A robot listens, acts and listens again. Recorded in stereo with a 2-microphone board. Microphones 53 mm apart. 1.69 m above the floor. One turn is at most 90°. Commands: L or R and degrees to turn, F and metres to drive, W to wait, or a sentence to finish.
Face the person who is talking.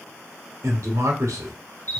R90
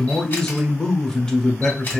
L10
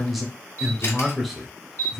Facing the man speaking.